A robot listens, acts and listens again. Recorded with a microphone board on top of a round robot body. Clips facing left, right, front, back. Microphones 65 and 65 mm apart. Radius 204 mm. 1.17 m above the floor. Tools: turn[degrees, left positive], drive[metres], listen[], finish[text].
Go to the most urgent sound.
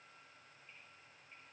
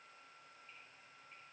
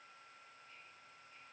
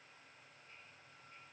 Action: listen[]
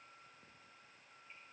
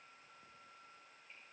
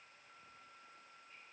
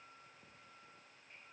Action: listen[]
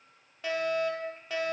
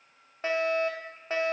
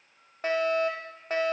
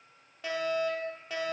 Thought: The fire alarm: 40° right.
Action: turn[-40]
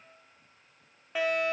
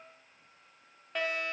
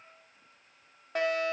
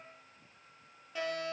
Action: drive[1.0]
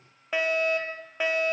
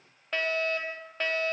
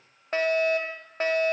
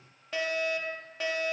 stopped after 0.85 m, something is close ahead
Thought: The fire alarm is now 15° left.
Action: turn[15]
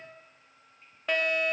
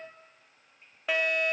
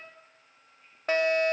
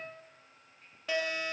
Action: finish[Arrived at the fire alarm, straight ahead.]